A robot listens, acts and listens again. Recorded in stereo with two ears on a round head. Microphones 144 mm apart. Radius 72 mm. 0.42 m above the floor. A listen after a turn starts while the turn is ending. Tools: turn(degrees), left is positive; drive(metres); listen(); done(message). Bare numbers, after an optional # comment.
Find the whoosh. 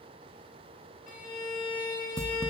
listen()
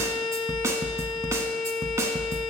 listen()
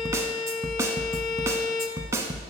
done("I can't make out a whoosh, only a violin and a snare drum.")